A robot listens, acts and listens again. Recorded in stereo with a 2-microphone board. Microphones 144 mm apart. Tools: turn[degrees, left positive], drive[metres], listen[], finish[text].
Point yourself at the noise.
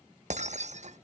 Thought: The breaking glass: about 55° right or 125° right.
Action: turn[-55]
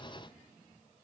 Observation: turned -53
Action: listen[]
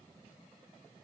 Action: finish[I heard breaking glass, but can't make it out now. It was about straight ahead or 75° right.]